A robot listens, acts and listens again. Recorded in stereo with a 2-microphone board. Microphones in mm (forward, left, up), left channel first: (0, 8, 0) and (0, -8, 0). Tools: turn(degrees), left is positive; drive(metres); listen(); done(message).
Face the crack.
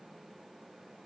listen()
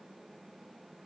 listen()
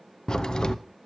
turn(degrees=50)
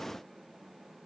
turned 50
listen()
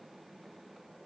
done("I heard a crack, but can't make it out now. It was about straight ahead or 80° left.")